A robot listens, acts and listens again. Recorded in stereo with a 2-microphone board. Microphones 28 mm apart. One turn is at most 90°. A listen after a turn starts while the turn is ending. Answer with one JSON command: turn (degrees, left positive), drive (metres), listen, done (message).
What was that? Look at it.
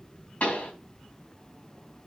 {"turn": 65}
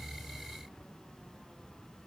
{"listen": true}
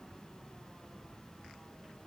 {"done": "I heard a pop, but can't make it out now. It was about straight ahead or 50° left."}